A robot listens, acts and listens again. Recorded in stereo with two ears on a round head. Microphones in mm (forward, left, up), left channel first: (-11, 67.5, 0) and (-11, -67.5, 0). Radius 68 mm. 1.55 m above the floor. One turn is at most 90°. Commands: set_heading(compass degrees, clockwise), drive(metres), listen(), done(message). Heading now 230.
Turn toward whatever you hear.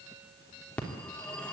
set_heading(200)
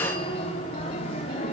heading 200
set_heading(110)
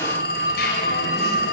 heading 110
set_heading(40)
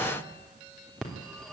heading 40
done("Facing the phone ringing.")